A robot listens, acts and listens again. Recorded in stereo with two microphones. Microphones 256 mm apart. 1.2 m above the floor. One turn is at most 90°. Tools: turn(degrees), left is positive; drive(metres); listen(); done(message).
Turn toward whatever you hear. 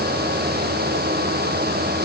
listen()
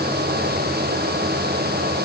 listen()
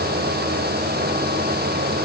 done("I can't make out anything.")